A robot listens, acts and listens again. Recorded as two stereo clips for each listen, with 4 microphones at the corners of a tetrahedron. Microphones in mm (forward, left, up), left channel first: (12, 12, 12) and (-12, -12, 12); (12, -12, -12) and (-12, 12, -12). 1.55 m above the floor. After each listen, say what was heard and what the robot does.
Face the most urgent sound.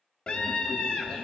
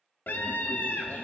The scream: 15° right. Turn 15° right.
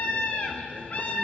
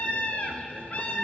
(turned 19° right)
Facing the scream.